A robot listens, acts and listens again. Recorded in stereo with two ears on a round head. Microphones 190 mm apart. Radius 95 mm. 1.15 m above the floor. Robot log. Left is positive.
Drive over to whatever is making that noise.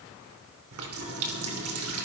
cmd yaw -90
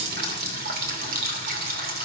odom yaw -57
note: So it is at 45° right.
cmd yaw -45
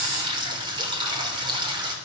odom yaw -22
note: The running tap is now 20° right.
cmd yaw -20
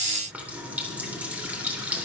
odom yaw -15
cmd fwd 1.0
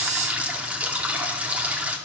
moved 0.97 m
cmd fwd 1.0
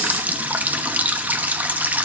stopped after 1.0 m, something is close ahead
note: The running tap is now 10° right.
cmd yaw -10
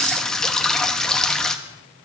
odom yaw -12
end: I am next to the running tap.